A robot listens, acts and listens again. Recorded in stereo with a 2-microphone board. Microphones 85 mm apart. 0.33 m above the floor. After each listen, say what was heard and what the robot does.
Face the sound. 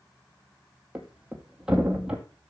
Turn 30° right.
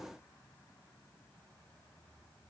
Keep listening.
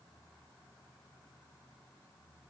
I heard a thud, but can't make it out now. It was about 20° left or 140° right.